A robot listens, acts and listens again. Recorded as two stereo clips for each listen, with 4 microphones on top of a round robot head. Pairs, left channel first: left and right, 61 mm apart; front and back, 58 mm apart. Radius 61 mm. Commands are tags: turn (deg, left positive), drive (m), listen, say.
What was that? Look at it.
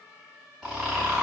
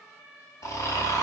<say>Facing the snoring, 2 to 4 m away.</say>